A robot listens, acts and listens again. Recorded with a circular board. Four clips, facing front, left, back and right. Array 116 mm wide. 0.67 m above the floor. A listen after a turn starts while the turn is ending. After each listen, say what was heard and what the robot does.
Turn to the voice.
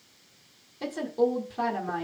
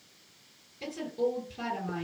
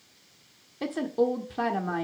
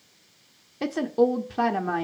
The woman speaking: 100° right. Turn 100° right.
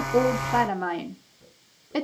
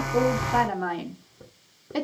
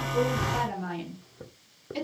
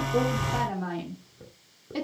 The woman speaking is now 25° left. Turn 25° left.
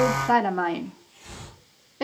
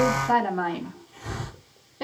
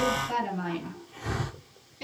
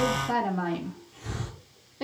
The woman speaking is now 10° left. Turn 10° left.
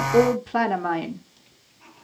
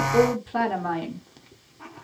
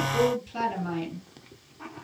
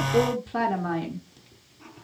Found it: a woman speaking, straight ahead, 1 to 2 m away.